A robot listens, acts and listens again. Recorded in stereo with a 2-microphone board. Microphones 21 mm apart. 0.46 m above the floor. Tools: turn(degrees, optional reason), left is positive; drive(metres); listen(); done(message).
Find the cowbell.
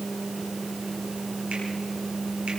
listen()
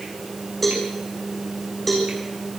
turn(degrees=30)
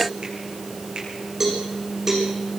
turn(degrees=-20, reason="So it is at 20° right.")
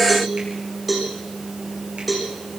done("Found it: a cowbell, straight ahead.")